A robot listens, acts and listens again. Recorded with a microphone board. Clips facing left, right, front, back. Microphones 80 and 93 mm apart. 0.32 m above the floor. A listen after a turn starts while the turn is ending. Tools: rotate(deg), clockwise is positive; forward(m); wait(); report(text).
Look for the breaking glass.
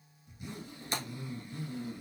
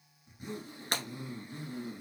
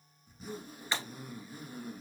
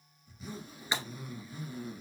rotate(100)
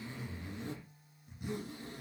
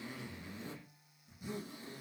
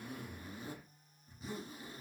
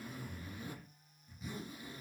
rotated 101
report("I heard breaking glass from this way, but can't make it out now.")